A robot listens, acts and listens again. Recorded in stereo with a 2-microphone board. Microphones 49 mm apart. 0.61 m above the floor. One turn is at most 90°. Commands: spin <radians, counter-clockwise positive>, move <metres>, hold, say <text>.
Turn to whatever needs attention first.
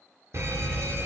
spin -1.22
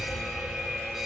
say Found it: an alarm, straight ahead.